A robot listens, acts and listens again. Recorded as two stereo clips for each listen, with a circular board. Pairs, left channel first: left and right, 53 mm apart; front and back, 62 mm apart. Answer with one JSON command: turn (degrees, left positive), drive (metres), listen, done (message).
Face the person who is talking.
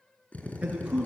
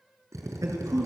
{"turn": -160}
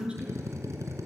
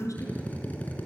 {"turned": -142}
{"turn": -20}
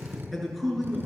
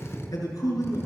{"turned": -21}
{"done": "Facing the man speaking."}